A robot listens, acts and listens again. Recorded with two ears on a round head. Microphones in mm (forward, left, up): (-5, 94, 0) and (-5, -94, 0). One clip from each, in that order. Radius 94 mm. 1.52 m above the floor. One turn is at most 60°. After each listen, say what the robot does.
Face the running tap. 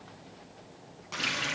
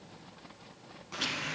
Turn 60° left.
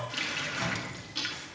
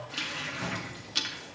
Turn 20° left.
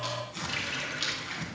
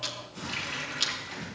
Facing the running tap.